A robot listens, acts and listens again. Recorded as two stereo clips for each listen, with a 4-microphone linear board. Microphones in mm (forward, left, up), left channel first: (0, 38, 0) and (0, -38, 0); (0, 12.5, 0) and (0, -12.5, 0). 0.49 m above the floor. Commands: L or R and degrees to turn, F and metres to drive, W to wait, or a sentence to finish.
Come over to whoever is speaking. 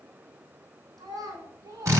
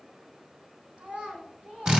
R50
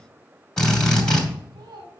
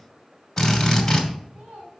R75
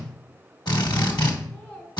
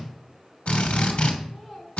L10
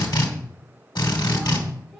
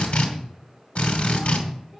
F1.0
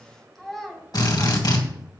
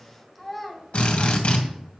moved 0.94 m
F1.0
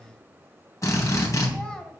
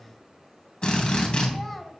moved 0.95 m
L10
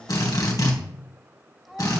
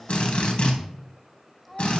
F1.0
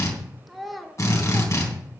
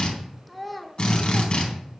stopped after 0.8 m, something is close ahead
I am next to the child speaking.